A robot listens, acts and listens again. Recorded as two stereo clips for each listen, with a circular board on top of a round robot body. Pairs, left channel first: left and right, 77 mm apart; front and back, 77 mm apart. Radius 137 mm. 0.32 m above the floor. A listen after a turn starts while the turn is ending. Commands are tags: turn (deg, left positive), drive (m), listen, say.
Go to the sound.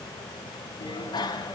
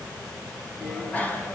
<turn deg="70"/>
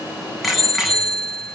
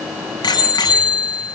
<drive m="1.0"/>
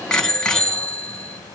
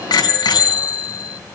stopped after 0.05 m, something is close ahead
<turn deg="10"/>
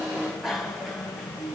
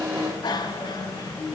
<say>Blocked. The bicycle bell is further on, straight ahead.</say>